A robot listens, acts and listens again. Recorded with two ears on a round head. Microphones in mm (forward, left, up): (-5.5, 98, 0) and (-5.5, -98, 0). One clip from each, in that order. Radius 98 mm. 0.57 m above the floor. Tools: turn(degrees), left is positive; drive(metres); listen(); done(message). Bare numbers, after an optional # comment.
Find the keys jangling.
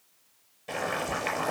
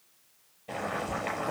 listen()
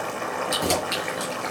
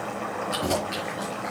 turn(90)
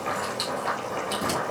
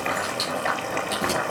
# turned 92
done("Facing the keys jangling, over 4 m away.")